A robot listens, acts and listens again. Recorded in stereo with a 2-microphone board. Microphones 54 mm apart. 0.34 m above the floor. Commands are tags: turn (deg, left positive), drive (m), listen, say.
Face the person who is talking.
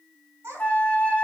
<turn deg="-55"/>
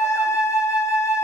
<listen/>
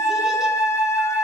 <listen/>
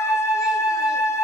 <say>I heard a child speaking, but can't make it out now. It was about straight ahead or 70° right.</say>